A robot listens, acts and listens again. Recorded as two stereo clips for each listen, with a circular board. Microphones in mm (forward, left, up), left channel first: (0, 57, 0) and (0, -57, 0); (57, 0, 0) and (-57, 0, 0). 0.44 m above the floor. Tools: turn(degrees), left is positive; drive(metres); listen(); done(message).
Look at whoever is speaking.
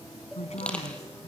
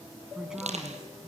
turn(degrees=95)
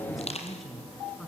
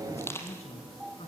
done("Facing the woman speaking, over 4 m away.")